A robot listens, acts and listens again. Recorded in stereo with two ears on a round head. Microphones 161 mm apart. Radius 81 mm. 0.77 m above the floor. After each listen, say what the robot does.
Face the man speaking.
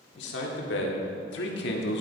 Turn 65° left.
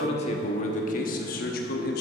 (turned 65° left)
Turn 60° left.
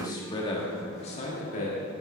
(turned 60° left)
Turn 45° left.
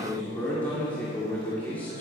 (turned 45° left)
Turn 10° left.
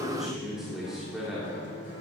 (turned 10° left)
Facing the man speaking.